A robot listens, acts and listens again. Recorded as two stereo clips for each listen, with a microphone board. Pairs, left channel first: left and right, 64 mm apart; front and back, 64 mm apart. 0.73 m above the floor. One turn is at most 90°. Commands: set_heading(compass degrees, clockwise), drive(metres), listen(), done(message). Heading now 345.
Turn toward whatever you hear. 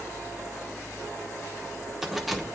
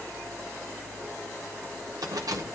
set_heading(255)
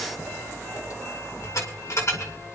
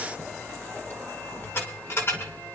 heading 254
set_heading(209)
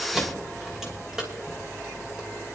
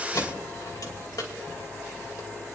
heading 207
set_heading(217)
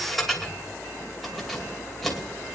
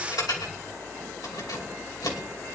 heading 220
done("Found it: keys jangling, straight ahead, 2 to 4 m away.")